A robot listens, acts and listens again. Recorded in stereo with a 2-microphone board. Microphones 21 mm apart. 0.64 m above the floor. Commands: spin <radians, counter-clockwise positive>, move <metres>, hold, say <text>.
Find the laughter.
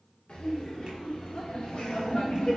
spin 0.87
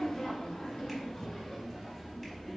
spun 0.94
spin 0.17
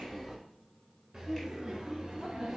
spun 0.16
spin -0.44
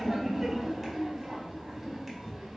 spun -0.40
spin -0.17
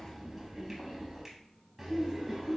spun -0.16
say Found it: laughter, straight ahead, 1 to 2 m away.